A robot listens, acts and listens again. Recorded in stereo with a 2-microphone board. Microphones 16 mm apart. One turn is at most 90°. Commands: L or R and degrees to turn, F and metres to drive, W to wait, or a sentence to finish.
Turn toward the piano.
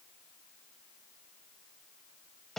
W
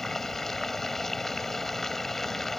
W
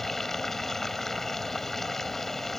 I can't make out a piano to turn to.